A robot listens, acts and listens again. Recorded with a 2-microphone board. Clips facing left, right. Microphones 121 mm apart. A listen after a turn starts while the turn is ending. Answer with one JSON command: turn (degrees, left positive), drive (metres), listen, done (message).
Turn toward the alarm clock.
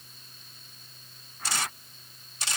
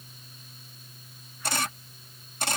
{"listen": true}
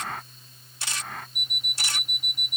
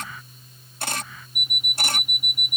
{"turn": -30}
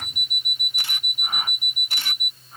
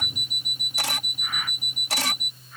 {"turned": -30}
{"turn": -140}
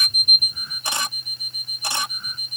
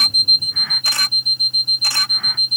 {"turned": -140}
{"turn": -20}
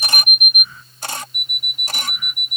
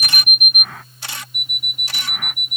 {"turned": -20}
{"done": "Found it: an alarm clock, straight ahead."}